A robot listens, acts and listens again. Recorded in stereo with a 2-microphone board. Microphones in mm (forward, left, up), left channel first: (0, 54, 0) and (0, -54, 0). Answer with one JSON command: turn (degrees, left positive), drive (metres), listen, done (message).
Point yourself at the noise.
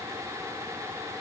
{"listen": true}
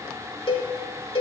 {"turn": 55}
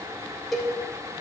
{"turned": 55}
{"done": "Facing the cowbell."}